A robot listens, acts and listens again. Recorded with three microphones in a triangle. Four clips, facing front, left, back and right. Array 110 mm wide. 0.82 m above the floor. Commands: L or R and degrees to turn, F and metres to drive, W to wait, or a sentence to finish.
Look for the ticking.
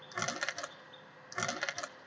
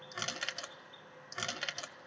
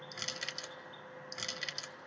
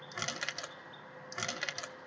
W
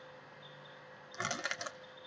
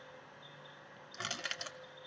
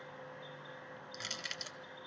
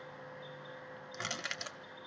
W
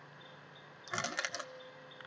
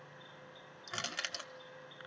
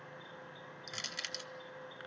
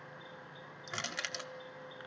I can't make out ticking to turn to.